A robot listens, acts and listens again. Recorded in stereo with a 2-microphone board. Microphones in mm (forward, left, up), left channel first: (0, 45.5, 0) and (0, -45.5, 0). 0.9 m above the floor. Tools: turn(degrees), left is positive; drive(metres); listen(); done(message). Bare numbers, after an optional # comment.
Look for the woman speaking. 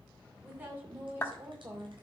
# The woman speaking: about 25° right or 155° right.
turn(-25)
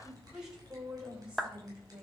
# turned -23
turn(-30)
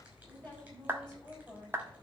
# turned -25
# So it is at 10° left.
turn(10)
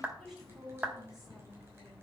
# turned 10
done("Facing the woman speaking.")